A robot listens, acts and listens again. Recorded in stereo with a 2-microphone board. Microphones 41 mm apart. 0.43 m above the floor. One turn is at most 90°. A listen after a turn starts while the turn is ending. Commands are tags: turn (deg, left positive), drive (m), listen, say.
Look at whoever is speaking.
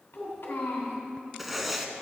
<turn deg="70"/>
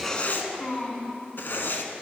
<turn deg="35"/>
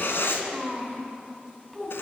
<turn deg="10"/>
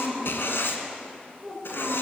<say>Facing the child speaking, 2 to 4 m away.</say>